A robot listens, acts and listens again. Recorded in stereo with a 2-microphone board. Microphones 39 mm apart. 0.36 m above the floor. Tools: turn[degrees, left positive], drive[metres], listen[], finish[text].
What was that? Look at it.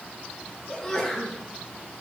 Action: turn[30]
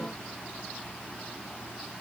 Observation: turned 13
Action: listen[]
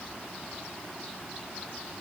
Action: finish[I heard a sneeze, but can't make it out now. It was about 5° right or 160° left.]